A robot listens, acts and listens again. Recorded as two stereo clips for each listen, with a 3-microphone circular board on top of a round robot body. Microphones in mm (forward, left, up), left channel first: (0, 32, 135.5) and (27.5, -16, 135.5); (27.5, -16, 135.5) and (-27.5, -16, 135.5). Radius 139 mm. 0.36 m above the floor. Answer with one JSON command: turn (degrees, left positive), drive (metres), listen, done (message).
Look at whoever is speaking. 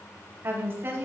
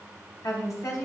{"turn": -15}
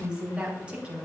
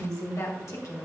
{"turn": 10}
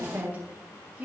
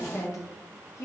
{"done": "Facing the woman speaking, 2 to 4 m away."}